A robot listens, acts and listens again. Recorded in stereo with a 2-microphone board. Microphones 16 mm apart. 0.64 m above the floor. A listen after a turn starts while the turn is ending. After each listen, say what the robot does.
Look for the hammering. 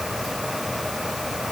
Keep listening.
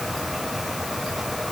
Keep listening.
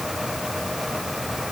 I can't make out hammering to turn to.